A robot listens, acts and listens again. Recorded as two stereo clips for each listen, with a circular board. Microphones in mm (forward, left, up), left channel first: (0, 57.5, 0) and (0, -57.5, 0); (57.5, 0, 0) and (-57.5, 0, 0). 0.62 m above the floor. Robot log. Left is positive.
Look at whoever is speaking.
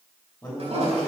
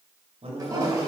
note: The man speaking: 165° left.
cmd yaw +165
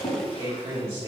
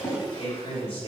note: The man speaking is now 25° right.
cmd yaw -25
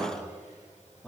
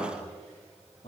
note: The man speaking is now 10° left.
cmd yaw +10
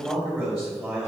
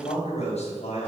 end: Found it: a man speaking, straight ahead.